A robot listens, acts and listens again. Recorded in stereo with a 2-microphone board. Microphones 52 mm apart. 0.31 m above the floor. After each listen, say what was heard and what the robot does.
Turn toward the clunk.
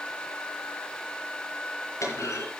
Turn 90° left.
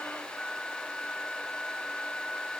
I heard a clunk from this way, but can't make it out now.